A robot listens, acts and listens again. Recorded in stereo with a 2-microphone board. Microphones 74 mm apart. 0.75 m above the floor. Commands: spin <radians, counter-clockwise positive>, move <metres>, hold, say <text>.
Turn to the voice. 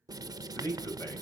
spin 0.87
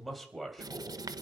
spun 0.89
say Found it: a man speaking, straight ahead.